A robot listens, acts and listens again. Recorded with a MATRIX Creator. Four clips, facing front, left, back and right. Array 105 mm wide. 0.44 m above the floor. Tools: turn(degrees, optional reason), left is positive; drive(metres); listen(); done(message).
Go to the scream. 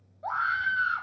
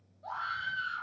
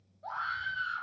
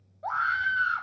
turn(degrees=-55, reason="The scream: 55° right.")
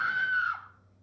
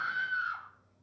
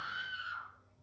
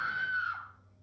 drive(metres=1.0)
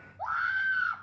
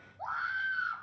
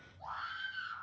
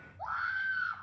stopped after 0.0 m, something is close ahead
done("Blocked. The scream is further on, straight ahead.")